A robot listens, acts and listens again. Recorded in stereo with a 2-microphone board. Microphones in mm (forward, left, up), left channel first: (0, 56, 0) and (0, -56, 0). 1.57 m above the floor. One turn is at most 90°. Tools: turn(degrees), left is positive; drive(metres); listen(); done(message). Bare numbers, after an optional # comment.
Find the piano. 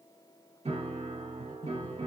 # The piano: about 65° right or 115° right.
turn(-65)
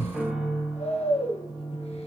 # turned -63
done("Found it: a piano, straight ahead, 2 to 4 m away.")